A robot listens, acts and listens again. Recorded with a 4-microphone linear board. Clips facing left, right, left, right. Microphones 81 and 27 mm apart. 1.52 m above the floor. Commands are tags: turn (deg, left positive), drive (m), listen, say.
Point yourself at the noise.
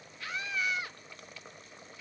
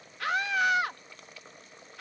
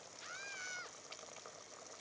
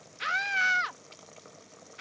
<turn deg="-70"/>
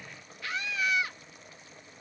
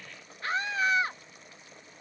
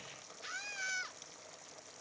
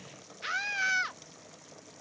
<turn deg="-40"/>
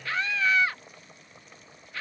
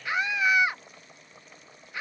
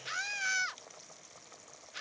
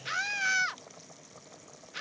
<turn deg="-15"/>
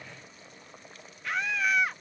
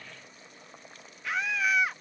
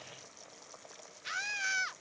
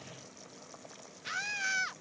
<say>Facing the scream.</say>